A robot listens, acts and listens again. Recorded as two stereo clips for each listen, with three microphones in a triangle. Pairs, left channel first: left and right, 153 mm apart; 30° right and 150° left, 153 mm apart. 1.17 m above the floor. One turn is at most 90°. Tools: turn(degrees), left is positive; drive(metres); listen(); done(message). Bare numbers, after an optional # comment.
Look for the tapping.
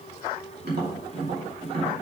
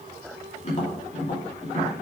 # The tapping: 75° right.
turn(-75)
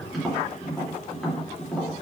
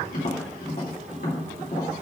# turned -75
done("Facing the tapping, 2 to 4 m away.")